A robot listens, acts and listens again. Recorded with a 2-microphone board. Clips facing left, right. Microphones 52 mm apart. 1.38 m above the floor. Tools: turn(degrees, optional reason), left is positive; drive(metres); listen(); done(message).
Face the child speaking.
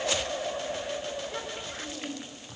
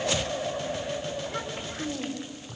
turn(degrees=30)
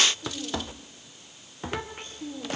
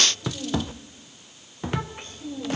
turn(degrees=145, reason="So it is at 145° left.")
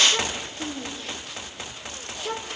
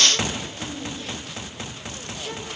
turn(degrees=45, reason="The child speaking is now 45° left.")
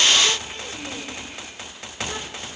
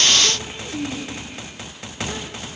turn(degrees=-15, reason="The child speaking is now 15° right.")
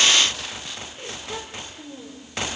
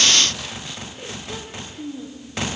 done("Facing the child speaking, 2 to 4 m away.")